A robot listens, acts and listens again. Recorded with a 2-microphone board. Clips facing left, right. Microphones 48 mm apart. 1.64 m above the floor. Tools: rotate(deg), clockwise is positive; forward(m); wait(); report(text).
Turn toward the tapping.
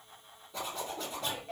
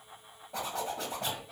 wait()
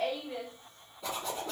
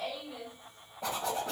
wait()
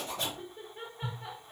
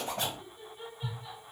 rotate(-90)
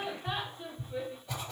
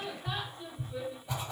rotate(10)
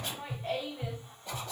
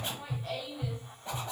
report("Found it: tapping, straight ahead.")